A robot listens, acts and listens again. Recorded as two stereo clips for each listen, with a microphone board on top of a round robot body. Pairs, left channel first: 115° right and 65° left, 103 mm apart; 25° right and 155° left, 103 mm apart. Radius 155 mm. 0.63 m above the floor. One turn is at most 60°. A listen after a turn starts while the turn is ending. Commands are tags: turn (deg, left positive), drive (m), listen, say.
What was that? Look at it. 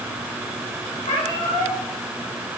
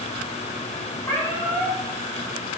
<turn deg="-60"/>
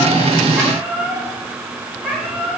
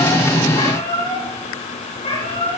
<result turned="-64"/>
<turn deg="-20"/>
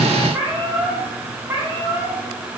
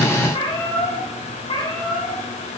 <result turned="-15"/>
<say>Facing the cat meowing.</say>